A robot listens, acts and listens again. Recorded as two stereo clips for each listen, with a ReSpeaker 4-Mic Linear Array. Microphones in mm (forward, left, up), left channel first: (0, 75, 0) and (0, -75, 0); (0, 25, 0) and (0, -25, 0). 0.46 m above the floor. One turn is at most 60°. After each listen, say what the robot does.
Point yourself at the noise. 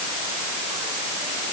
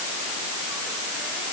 Keep listening.
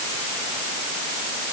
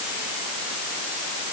Keep listening.
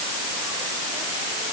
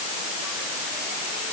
I can't make out anything to turn to.